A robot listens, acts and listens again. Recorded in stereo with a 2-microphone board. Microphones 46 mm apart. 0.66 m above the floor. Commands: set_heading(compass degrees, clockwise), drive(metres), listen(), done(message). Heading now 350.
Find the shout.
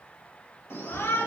set_heading(285)
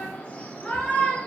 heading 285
set_heading(255)
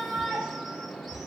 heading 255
done("Found it: a shout, straight ahead, 2 to 4 m away.")